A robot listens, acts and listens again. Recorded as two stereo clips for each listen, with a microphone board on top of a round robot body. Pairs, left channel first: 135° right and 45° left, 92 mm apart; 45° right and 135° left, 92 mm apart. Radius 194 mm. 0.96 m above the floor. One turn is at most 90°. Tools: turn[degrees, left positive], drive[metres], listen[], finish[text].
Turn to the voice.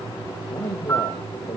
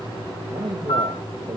Thought: The man speaking: 175° left.
Action: turn[90]
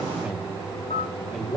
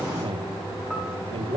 Thought: The man speaking is now 140° left.
Action: turn[90]
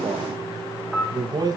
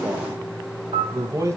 Thought: The man speaking is now 85° left.
Action: turn[85]
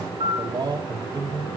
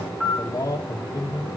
Action: finish[Facing the man speaking, 1 to 2 m away.]